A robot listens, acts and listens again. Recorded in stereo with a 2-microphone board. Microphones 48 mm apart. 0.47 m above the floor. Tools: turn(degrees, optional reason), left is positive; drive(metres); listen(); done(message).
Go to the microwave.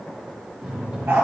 turn(degrees=-15, reason="The microwave: about 15° right or 165° right.")
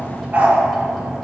drive(metres=1.0)
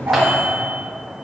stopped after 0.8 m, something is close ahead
done("Arrived at the microwave, straight ahead.")